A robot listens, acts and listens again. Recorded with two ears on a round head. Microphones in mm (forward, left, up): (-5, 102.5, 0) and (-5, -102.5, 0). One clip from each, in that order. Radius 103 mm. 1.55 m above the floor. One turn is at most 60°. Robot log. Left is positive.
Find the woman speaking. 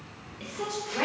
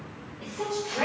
note: The woman speaking: about 55° left or 125° left.
cmd yaw +55
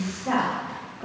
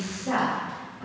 note: So it is at 85° left.
cmd yaw +60
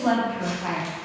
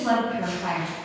note: The woman speaking is now 45° left.
cmd yaw +45
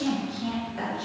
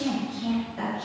note: The woman speaking is now 30° left.
cmd yaw +30
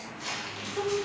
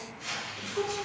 end: Found it: a woman speaking, straight ahead.